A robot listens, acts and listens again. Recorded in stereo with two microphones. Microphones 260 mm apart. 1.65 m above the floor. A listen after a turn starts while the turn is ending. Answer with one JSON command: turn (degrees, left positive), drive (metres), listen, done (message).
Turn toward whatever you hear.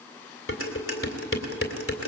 {"turn": 55}
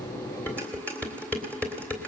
{"done": "Facing the dishes clattering."}